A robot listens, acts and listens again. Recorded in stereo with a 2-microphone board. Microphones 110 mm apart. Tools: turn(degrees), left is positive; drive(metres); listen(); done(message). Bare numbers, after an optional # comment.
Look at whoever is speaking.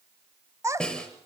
# The child speaking: about 30° right or 150° right.
turn(-30)
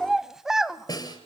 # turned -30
done("Found it: a child speaking, straight ahead.")